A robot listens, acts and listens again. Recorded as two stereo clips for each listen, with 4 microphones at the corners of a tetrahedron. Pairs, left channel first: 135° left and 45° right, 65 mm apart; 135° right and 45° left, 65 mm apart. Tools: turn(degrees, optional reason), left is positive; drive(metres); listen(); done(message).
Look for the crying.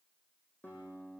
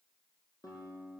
listen()
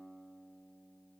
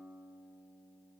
listen()
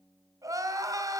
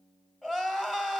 turn(degrees=-55, reason="The crying: 55° right.")
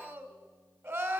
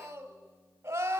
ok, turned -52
done("Facing the crying, 1 to 2 m away.")